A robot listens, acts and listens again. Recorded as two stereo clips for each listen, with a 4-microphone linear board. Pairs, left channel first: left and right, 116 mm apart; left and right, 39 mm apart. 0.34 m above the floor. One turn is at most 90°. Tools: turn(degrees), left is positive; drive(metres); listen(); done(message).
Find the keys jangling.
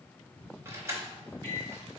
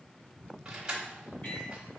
turn(degrees=-25)
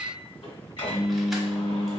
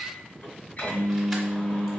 listen()
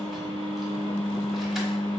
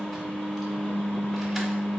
listen()
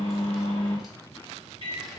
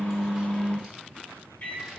done("I heard keys jangling, but can't make it out now. It was about straight ahead or 130° right.")